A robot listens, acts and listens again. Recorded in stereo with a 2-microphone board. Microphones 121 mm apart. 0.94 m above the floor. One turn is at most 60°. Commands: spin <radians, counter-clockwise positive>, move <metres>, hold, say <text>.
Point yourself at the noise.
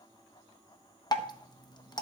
spin 0.61
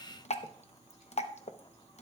spin 1.05
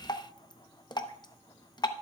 spin 0.70
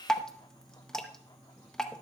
say Facing the dripping.